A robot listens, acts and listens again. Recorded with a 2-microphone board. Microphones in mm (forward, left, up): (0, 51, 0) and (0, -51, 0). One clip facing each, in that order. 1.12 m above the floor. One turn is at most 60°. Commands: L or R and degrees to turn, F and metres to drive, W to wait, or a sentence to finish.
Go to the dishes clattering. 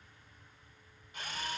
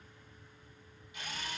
W
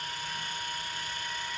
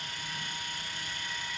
W
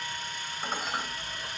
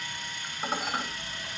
R30
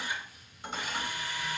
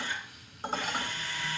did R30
R60
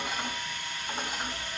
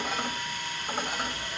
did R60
R60
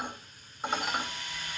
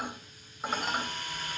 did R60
F1.0
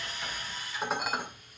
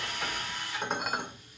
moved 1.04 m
F1.0
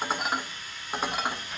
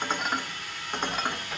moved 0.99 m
F1.0
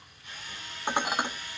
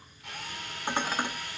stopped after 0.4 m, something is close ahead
L15
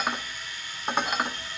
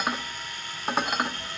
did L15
Arrived at the dishes clattering, straight ahead.